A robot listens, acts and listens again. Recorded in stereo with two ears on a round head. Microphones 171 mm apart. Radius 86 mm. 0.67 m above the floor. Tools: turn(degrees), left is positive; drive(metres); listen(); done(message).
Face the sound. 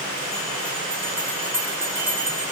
turn(degrees=-30)
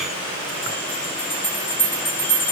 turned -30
turn(degrees=15)
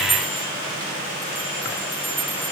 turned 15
done("Found it: a bell, straight ahead.")